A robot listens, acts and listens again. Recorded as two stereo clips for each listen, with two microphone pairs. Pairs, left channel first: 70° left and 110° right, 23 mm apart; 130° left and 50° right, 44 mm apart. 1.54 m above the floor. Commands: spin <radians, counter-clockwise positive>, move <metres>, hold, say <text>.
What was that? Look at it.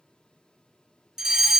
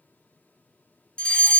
spin -2.97
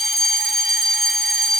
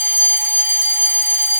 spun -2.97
spin -0.70
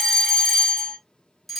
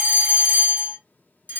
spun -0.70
spin -0.17
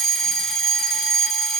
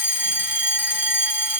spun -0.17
say Facing the fire alarm.